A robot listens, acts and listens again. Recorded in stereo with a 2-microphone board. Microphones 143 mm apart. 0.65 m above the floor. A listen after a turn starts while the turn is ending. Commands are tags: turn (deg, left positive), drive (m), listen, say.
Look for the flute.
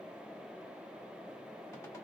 <listen/>
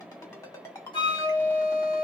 <turn deg="35"/>
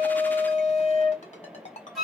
<say>Facing the flute.</say>